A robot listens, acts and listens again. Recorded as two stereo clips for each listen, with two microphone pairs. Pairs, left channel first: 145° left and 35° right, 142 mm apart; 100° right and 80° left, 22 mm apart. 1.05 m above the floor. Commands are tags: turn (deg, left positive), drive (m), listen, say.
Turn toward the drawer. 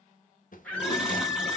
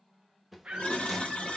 <turn deg="160"/>
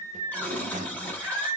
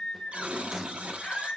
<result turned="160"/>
<turn deg="-10"/>
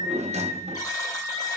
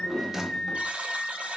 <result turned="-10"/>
<say>Found it: a drawer, straight ahead, under 1 m away.</say>